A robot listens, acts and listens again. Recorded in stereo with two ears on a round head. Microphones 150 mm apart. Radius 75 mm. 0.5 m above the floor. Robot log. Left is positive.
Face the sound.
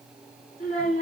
note: The child speaking: about 45° left or 135° left.
cmd yaw +45
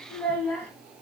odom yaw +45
end: Facing the child speaking, 2 to 4 m away.